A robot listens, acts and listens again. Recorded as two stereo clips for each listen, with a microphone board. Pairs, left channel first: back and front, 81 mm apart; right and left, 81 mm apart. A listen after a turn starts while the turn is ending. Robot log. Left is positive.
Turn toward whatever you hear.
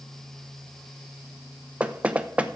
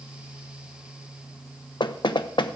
note: The knocking: 75° right.
cmd yaw -75
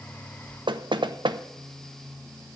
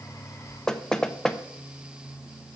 end: Found it: knocking, straight ahead.